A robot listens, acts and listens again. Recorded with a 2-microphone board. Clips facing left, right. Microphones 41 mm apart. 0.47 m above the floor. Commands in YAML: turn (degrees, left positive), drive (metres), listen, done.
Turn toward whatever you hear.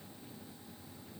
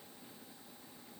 listen: true
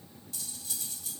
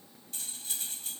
turn: -45
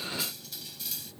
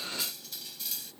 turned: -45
done: "Found it: cutlery clinking, straight ahead."